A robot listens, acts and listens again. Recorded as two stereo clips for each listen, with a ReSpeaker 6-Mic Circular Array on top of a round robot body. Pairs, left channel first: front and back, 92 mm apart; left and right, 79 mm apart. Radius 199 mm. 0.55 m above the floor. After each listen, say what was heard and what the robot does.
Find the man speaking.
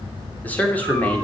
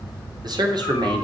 The man speaking: 75° right. Turn 75° right.
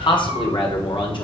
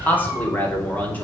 The man speaking is now 25° left. Turn 25° left.
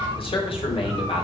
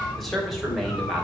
Found it: a man speaking, straight ahead.